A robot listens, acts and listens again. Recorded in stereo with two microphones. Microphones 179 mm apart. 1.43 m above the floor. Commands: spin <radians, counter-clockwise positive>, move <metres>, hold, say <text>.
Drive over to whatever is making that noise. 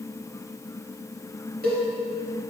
spin -1.05
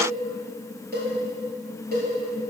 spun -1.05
spin -1.05
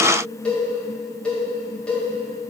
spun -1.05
move 1.0
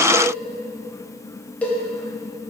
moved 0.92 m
move 1.0
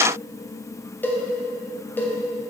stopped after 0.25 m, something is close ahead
spin 0.17
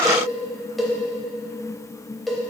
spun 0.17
say I am next to the cowbell.